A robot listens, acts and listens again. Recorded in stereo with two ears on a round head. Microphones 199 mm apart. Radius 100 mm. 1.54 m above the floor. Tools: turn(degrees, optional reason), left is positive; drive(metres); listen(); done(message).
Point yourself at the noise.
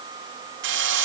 turn(degrees=-55, reason="The drill: about 55° right or 125° right.")
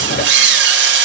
turn(degrees=-60, reason="So it is at 60° right.")
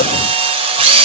turn(degrees=-30, reason="The drill is now 30° right.")
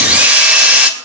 done("Found it: a drill, straight ahead, 2 to 4 m away.")